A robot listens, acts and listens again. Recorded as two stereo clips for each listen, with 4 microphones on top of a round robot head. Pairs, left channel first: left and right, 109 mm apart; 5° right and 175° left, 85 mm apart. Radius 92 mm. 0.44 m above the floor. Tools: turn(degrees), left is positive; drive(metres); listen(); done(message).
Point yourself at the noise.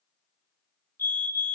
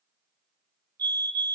turn(degrees=155)
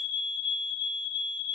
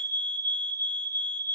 turn(degrees=55)
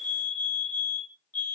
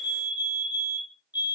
turn(degrees=15)
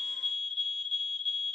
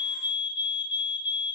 done("Facing the fire alarm, 2 to 4 m away.")